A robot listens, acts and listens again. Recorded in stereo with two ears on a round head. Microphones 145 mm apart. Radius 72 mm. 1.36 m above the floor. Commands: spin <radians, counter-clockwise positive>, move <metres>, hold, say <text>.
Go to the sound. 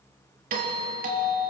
spin -0.96
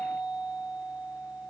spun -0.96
move 1.0
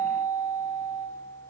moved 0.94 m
move 1.0
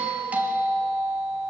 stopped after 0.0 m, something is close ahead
spin -0.17
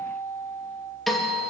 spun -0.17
say Blocked. The doorbell is further on, straight ahead.